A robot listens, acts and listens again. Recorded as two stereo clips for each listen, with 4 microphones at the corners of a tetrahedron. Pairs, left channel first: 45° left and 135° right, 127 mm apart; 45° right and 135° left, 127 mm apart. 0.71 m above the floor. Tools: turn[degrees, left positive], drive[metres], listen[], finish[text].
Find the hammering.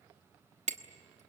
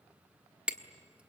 Thought: The hammering: 145° right.
Action: turn[-145]
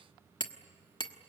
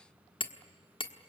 Action: finish[Found it: hammering, straight ahead.]